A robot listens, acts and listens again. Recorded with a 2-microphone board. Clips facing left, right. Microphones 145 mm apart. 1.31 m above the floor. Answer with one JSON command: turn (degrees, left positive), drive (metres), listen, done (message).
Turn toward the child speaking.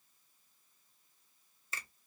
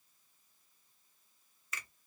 {"listen": true}
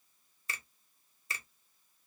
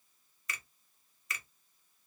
{"listen": true}
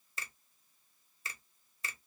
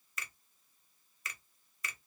{"done": "I can't make out a child speaking to turn to."}